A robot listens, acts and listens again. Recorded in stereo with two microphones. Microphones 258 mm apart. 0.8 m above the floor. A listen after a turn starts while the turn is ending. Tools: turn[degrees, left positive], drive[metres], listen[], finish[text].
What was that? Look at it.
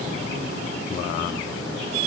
Action: listen[]
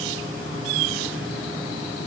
Action: listen[]
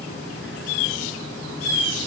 Action: finish[I can't make out anything to turn to.]